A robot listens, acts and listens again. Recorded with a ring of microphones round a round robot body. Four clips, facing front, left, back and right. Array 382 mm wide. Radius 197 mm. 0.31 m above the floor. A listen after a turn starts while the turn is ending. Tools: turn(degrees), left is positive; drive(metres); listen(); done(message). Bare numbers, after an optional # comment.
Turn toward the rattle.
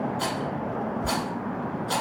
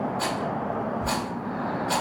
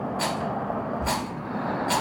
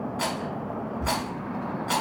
# The rattle: 125° right.
turn(-125)
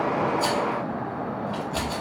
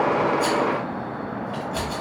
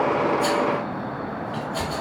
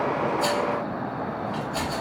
# The rattle is now 25° left.
turn(25)
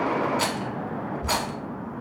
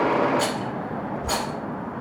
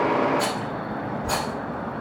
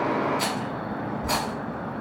done("Facing the rattle.")